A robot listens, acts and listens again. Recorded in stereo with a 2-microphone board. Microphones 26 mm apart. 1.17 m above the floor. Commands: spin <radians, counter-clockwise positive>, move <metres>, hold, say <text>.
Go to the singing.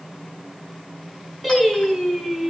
spin 0.52
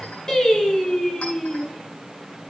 spin 2.62
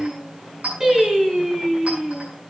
spin -0.35
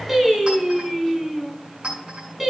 spin -0.17
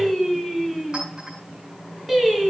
move 1.0
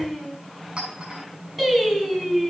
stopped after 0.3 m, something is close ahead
say Something is in my way. I am facing the singing but have not reached it.